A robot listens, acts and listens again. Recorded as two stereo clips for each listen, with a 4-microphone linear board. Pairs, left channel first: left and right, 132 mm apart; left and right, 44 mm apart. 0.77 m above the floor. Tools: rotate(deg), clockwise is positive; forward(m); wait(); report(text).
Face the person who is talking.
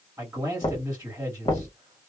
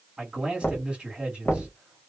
rotate(15)
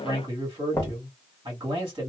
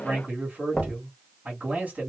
rotate(150)
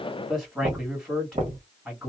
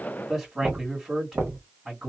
rotate(15)
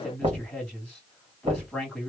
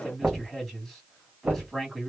report("Found it: a man speaking, straight ahead, 1 to 2 m away.")